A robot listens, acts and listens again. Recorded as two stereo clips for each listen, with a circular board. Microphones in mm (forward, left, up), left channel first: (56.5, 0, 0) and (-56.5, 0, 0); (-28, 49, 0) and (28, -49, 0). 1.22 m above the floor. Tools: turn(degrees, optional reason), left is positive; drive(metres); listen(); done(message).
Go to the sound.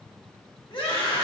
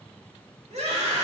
turn(degrees=-45, reason="The scream: 45° right.")
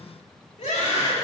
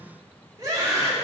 drive(metres=1.0)
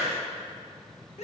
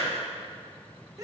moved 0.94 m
drive(metres=1.0)
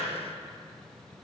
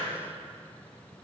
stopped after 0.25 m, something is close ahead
listen()
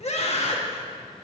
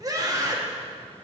done("Arrived at the scream, straight ahead.")